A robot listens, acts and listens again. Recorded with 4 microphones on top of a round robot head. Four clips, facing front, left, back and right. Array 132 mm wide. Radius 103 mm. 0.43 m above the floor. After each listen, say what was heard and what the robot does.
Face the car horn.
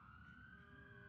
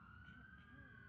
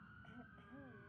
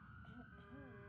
Keep listening.
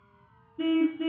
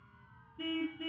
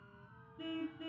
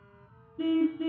The car horn: 30° right. Turn 30° right.
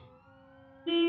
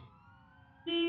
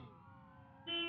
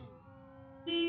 The car horn is now 10° left. Turn 10° left.
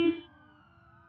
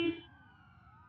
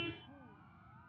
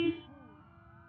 Found it: a car horn, straight ahead.